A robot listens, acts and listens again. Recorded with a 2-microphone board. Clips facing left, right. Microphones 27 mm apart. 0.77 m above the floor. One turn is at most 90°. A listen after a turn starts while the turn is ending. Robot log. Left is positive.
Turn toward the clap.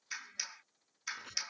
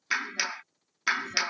note: The clap: about 60° right or 120° right.
cmd yaw -60
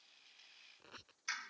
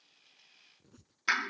note: So it is at 55° right.
cmd yaw -55
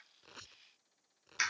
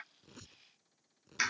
end: Found it: a clap, straight ahead.